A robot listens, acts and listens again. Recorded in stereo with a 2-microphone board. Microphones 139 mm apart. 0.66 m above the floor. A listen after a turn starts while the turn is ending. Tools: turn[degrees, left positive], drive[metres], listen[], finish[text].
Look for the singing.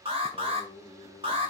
Thought: The singing: about 50° left or 130° left.
Action: turn[50]
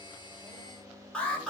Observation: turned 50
Thought: So it is at 10° left.
Action: turn[10]
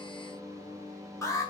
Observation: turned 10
Action: finish[Found it: singing, straight ahead.]